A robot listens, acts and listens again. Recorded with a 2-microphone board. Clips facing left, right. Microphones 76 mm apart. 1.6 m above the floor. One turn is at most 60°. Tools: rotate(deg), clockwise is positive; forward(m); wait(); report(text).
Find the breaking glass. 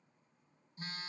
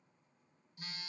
wait()
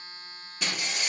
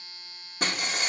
rotate(40)
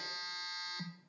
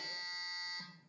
wait()
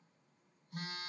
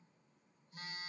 report("I heard breaking glass, but can't make it out now. It was about straight ahead or 100° right.")